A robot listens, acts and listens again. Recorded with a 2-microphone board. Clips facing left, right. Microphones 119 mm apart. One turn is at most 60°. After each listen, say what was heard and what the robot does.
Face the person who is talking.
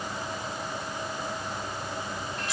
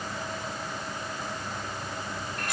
Keep listening.
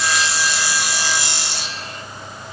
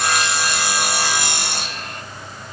Keep listening.
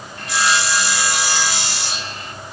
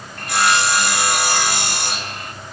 I can't make out anyone speaking to turn to.